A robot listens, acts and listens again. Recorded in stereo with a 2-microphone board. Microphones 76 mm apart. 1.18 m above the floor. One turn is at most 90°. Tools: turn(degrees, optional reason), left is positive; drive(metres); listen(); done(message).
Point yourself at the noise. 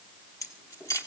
turn(degrees=50, reason="The keys jangling: about 50° left or 130° left.")
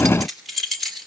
done("Found it: keys jangling, straight ahead.")